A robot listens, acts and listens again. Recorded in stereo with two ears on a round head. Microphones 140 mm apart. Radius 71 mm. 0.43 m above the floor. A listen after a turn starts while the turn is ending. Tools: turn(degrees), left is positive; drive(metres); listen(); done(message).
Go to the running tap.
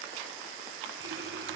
listen()
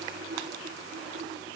turn(degrees=-90)
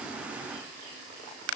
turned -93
listen()
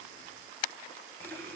turn(degrees=15)
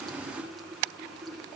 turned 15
drive(metres=1.0)
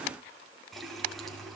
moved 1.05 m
drive(metres=1.0)
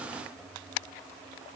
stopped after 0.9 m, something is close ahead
done("I am next to the running tap.")